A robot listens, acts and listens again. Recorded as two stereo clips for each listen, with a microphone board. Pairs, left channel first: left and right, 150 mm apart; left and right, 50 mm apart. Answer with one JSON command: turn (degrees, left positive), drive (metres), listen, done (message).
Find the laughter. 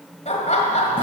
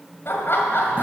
{"turn": 50}
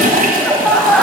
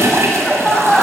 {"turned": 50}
{"turn": 10}
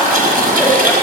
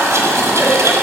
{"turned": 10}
{"done": "Facing the laughter."}